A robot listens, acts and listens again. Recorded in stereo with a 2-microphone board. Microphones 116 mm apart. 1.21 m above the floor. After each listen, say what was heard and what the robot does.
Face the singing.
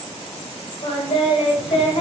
The singing: about 60° left or 120° left. Turn 60° left.
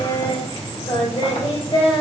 So it is at 50° left. Turn 50° left.
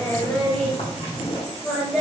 Found it: singing, straight ahead.